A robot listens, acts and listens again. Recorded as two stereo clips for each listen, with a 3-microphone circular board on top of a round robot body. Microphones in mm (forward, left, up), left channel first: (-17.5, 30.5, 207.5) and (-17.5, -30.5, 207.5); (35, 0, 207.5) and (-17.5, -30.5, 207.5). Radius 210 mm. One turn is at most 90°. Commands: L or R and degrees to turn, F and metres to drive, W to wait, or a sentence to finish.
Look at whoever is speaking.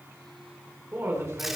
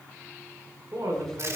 R90
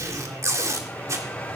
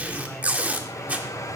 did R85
R55
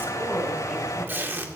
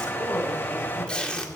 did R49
R10
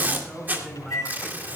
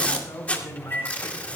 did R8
Facing the woman speaking.